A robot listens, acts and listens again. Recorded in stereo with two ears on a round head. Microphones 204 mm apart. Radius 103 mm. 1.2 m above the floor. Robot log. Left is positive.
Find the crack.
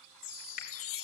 note: The crack: about 35° left or 145° left.
cmd yaw +35
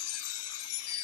cmd idle
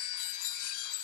end: I heard a crack, but can't make it out now. It was about straight ahead or 110° left.